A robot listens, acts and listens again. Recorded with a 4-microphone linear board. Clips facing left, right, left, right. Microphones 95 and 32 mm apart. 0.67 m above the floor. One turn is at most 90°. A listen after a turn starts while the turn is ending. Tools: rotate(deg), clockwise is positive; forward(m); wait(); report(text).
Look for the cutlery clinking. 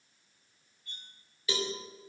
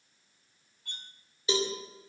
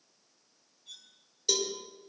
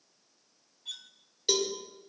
rotate(75)
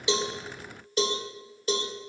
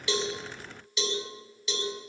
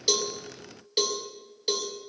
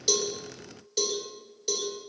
wait()
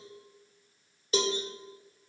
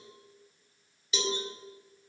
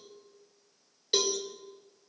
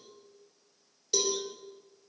wait()
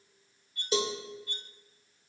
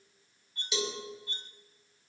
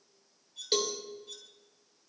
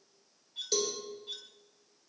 rotate(30)
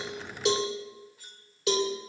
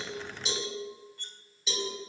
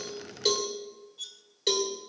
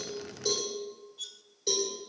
report("Found it: cutlery clinking, straight ahead.")